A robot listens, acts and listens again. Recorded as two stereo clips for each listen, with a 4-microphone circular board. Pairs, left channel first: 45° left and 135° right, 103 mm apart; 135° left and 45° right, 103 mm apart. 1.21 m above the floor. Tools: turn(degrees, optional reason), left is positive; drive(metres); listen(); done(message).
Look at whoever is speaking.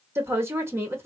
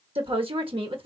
turn(degrees=-70, reason="The woman speaking: 70° right.")
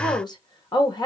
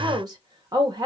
done("Found it: a woman speaking, straight ahead.")